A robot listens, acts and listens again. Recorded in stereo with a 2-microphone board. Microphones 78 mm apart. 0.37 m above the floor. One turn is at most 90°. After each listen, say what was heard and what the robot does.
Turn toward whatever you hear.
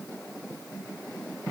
Keep listening.
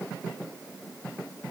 Keep listening.
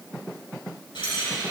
Turn 90° left.
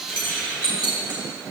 So it is at 15° right. Turn 15° right.
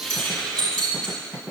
Found it: keys jangling, straight ahead.